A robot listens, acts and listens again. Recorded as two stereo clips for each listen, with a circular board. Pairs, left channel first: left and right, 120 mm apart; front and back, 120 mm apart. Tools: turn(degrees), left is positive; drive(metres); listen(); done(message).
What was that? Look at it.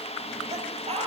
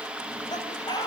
turn(degrees=-55)
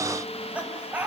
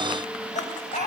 turn(degrees=-10)
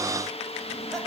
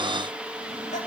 listen()
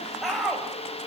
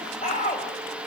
done("Facing the laughter.")